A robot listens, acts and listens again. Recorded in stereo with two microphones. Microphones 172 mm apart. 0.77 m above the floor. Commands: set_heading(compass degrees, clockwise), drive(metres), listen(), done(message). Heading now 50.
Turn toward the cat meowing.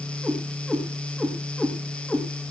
set_heading(20)
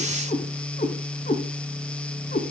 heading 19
set_heading(264)
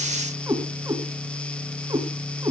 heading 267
set_heading(292)
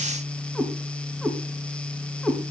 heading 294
done("Found it: a cat meowing, straight ahead.")